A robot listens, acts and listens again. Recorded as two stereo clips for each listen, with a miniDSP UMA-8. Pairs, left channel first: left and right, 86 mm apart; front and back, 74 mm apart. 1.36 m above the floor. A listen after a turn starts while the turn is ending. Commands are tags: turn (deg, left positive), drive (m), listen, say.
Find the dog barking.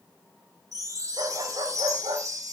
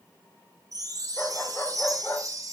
<turn deg="-55"/>
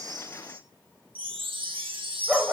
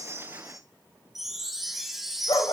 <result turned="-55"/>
<turn deg="-10"/>
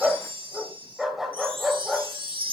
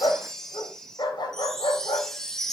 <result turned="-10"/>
<say>Facing the dog barking, 2 to 4 m away.</say>